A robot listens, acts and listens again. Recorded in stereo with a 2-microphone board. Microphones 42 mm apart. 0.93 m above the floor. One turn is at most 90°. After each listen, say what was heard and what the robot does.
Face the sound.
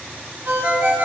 The ringtone: about 45° right or 135° right. Turn 45° right.
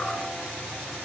Keep listening.
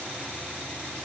Keep listening.
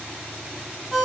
Facing the ringtone.